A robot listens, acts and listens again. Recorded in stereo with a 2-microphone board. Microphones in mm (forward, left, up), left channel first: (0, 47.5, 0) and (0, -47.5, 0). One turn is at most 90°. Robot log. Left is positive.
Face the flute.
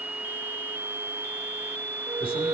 note: The flute: about 35° right or 145° right.
cmd yaw -35
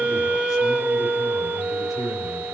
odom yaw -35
end: Found it: a flute, straight ahead, under 1 m away.